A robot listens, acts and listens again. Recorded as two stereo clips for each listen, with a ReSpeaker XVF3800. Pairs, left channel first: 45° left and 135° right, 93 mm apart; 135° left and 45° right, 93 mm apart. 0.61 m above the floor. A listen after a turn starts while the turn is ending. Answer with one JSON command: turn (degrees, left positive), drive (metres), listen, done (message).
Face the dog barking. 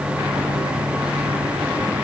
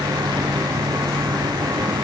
{"listen": true}
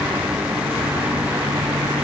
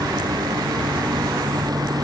{"listen": true}
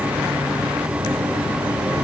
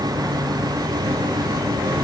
{"done": "I can't make out a dog barking to turn to."}